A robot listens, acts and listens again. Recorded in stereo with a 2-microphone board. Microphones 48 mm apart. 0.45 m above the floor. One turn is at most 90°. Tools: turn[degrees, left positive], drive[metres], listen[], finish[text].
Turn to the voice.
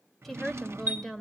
Action: turn[30]
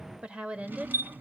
Thought: So it is at 25° right.
Action: turn[-25]
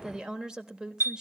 Thought: The woman speaking is now 20° right.
Action: turn[-20]
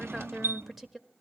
Action: finish[Facing the woman speaking.]